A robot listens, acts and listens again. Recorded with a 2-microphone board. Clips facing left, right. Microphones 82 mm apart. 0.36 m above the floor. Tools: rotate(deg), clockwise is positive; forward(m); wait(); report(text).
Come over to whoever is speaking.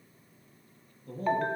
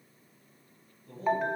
rotate(-65)
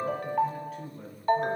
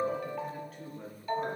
forward(1.0)
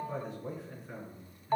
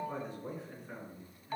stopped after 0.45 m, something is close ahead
report("Something is in my way. I am facing the man speaking but have not reached it.")